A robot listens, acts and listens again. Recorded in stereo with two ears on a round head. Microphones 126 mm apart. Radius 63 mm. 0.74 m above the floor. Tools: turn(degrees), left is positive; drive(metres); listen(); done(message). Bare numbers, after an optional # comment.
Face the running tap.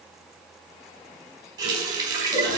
# The running tap: about 30° right or 150° right.
turn(-30)
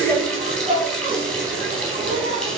done("Found it: a running tap, straight ahead.")